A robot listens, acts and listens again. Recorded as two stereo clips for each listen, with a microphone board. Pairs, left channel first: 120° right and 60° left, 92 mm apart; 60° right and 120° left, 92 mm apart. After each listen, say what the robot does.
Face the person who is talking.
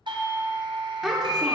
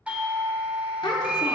Turn 20° right.
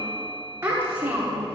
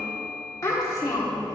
Facing the child speaking.